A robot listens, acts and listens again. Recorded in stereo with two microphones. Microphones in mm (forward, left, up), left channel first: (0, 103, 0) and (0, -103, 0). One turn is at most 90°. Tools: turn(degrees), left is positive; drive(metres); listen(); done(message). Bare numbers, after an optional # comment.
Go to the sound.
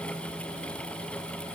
listen()
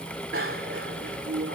turn(-90)
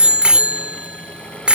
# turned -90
drive(1.0)
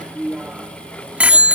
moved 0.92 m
drive(1.0)
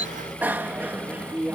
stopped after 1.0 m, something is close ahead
# The bicycle bell is now 10° right.
turn(-10)
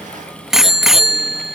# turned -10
done("I am next to the bicycle bell.")